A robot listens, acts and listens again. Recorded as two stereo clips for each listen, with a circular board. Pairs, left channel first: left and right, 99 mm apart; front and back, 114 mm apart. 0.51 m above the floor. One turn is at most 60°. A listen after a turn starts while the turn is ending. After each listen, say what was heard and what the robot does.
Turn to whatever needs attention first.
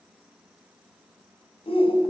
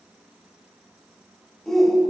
The shout: 90° left. Turn 60° left.
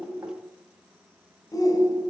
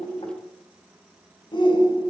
The shout is now 40° left. Turn 40° left.
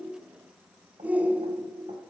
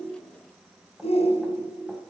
The shout is now 15° right. Turn 15° right.
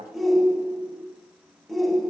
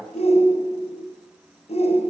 Facing the shout.